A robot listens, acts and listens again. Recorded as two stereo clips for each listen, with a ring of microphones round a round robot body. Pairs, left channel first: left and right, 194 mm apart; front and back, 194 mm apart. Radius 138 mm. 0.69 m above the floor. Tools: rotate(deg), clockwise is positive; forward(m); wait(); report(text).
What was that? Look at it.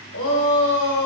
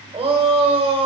rotate(-120)
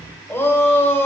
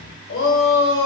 rotate(-10)
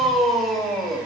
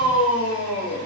report("Facing the shout, 2 to 4 m away.")